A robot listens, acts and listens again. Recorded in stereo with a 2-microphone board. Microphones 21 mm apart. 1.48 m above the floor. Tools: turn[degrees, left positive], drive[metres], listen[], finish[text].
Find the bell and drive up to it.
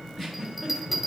Action: turn[-30]
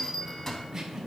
Thought: So it is at 30° left.
Action: turn[30]
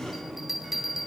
Action: drive[1.0]
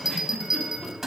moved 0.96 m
Thought: The bell is now 10° right.
Action: turn[-10]
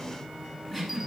Action: listen[]
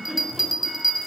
Action: drive[1.0]
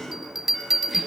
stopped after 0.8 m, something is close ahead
Thought: The bell is now 10° right.
Action: turn[-10]
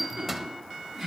Action: finish[I am next to the bell.]